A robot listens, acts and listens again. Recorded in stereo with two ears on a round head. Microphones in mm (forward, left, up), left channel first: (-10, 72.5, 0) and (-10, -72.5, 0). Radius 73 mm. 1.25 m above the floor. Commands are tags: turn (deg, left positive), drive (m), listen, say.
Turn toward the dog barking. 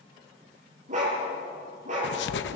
<turn deg="-55"/>
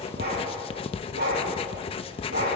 <turn deg="-65"/>
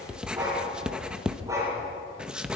<turn deg="-20"/>
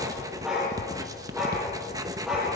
<say>Found it: a dog barking, straight ahead, over 4 m away.</say>